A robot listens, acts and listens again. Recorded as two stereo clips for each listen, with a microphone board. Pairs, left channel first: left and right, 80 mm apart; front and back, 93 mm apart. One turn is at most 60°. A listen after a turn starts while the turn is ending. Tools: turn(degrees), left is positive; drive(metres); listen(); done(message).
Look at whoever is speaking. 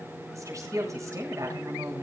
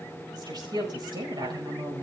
turn(degrees=-60)
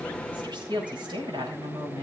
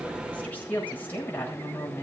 turn(degrees=-60)
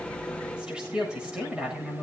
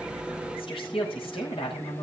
turn(degrees=-10)
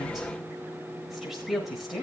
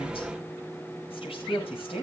done("Facing the woman speaking, over 4 m away.")